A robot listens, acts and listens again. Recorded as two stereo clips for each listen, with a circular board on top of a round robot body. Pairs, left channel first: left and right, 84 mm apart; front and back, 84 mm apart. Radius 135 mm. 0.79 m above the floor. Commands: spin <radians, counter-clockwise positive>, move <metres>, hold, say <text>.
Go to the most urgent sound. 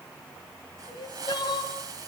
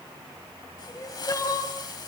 spin 0.87
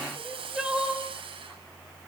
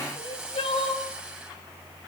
spin -0.17
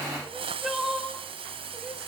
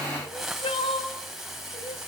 move 1.0
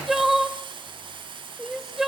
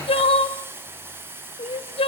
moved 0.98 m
move 1.0
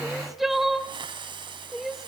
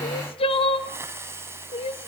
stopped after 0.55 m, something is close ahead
say I am next to the crying.